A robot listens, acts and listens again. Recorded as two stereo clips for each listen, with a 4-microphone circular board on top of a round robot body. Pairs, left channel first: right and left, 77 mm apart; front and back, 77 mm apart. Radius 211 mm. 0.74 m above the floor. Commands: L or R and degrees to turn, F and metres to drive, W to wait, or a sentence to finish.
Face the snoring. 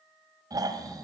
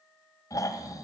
L50
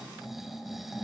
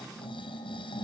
Facing the snoring.